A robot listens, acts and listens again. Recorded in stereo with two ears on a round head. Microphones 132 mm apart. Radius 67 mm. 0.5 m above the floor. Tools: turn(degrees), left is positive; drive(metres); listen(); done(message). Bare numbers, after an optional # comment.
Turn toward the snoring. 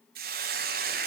listen()
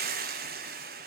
listen()
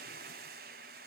done("I can't make out snoring to turn to.")